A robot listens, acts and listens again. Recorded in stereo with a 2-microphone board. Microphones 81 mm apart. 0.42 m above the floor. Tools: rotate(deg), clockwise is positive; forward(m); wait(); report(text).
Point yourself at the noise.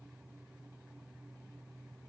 wait()
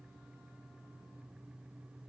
wait()
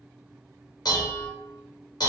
rotate(-55)
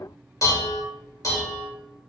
rotate(-50)
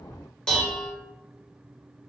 rotate(-10)
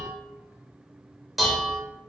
report("Found it: dishes clattering, straight ahead.")